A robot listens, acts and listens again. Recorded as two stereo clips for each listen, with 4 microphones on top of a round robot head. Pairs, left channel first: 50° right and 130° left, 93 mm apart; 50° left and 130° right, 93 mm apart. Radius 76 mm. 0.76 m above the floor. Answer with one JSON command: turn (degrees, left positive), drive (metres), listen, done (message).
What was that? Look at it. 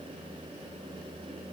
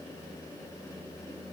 {"listen": true}
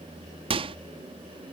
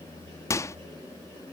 {"turn": 105}
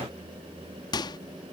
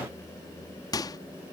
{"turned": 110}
{"done": "Found it: a microwave, straight ahead."}